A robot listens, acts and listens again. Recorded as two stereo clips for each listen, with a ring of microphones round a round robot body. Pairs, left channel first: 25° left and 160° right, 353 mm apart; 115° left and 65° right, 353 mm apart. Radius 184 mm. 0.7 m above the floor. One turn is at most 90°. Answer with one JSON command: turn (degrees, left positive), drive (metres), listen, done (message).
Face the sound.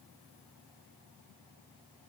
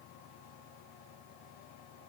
{"listen": true}
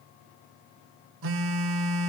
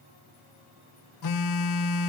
{"turn": 90}
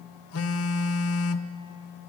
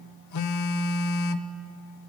{"turn": 70}
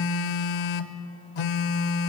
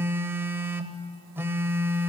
{"turn": 15}
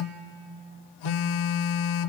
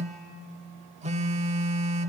{"done": "Facing the phone buzzing, under 1 m away."}